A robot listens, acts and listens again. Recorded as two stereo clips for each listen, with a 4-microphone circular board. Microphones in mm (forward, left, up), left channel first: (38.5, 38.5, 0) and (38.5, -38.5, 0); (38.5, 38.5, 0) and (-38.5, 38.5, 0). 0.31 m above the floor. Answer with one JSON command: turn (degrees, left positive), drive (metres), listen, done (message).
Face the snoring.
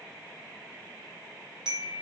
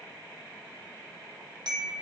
{"listen": true}
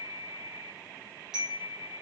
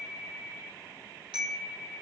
{"listen": true}
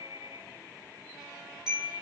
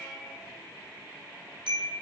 {"done": "I can't make out snoring to turn to."}